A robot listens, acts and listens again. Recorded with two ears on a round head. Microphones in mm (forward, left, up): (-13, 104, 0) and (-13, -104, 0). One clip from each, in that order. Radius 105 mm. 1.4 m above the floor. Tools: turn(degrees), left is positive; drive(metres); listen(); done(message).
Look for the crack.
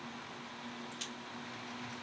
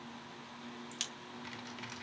turn(degrees=-60)
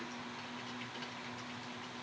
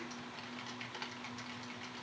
listen()
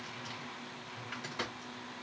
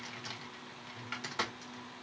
done("I heard a crack, but can't make it out now. It was about straight ahead or 60° right.")